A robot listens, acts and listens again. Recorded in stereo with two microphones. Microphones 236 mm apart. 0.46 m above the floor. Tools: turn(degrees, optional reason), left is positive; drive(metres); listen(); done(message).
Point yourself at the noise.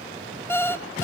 turn(degrees=30)
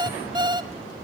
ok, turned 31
turn(degrees=-20, reason="So it is at 20° right.")
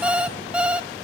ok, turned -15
done("Found it: an alarm clock, straight ahead, under 1 m away.")